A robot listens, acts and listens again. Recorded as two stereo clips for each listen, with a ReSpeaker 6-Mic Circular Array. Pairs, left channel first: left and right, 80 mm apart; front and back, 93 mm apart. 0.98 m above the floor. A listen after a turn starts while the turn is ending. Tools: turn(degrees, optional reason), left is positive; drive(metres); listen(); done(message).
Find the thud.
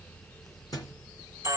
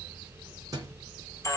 turn(degrees=130, reason="The thud: 130° left.")
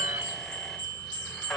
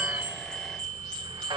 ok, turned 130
done("Facing where the thud came from. I can't hear it now.")